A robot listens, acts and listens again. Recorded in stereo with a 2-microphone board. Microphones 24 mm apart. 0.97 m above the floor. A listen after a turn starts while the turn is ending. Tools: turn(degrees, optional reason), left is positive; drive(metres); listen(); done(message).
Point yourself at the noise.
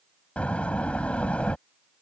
turn(degrees=70, reason="The door slam: about 70° left or 110° left.")
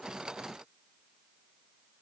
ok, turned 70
listen()
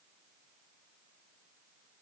done("I heard a door slam, but can't make it out now. It was about straight ahead or 40° left.")